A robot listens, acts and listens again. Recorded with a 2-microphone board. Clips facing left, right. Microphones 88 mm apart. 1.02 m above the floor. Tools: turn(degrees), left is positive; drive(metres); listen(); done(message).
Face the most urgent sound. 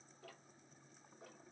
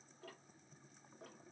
listen()
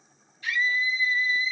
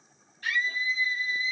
turn(degrees=-50)
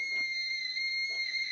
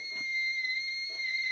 turn(degrees=-70)
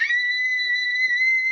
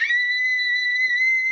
turn(degrees=10)
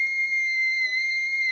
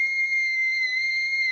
done("Found it: a scream, straight ahead.")